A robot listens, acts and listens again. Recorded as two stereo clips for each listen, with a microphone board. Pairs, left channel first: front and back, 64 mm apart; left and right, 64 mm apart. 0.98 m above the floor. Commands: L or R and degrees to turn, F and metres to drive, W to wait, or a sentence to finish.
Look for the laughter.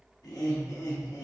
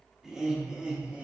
R20
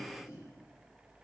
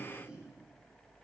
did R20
R20
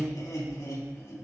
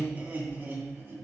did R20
R40
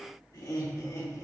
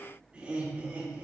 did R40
R25
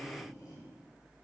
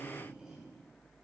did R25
R10
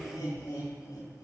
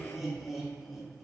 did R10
Facing the laughter.